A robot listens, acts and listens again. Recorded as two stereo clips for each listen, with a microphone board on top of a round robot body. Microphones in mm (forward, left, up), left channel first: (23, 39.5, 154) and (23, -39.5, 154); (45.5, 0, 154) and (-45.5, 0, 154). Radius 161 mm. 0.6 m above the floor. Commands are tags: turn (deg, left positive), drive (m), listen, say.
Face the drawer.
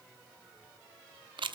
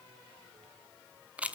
<listen/>
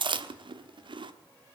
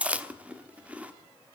<listen/>
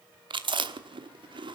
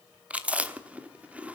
<say>I can't make out a drawer to turn to.</say>